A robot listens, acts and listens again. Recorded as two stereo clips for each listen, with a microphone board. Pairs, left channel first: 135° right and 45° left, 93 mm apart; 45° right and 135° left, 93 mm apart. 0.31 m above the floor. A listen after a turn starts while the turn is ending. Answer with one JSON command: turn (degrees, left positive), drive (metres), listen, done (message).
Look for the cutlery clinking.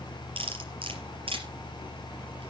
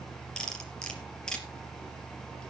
{"turn": 35}
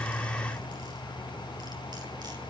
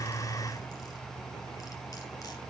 {"listen": true}
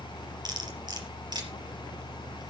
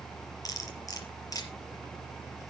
{"done": "Found it: cutlery clinking, straight ahead."}